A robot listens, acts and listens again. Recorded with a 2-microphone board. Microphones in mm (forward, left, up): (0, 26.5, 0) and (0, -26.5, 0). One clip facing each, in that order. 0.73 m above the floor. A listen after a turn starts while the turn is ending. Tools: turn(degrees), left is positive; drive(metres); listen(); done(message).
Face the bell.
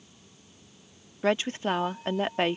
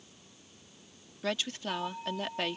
turn(degrees=-20)
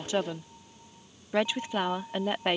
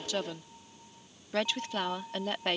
done("Found it: a bell, straight ahead.")